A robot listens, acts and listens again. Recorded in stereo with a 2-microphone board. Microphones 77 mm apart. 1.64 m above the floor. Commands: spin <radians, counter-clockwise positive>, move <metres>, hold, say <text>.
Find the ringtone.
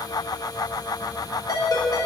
spin 0.96
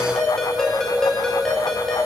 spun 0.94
spin 0.17
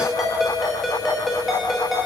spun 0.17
say Found it: a ringtone, straight ahead, 1 to 2 m away.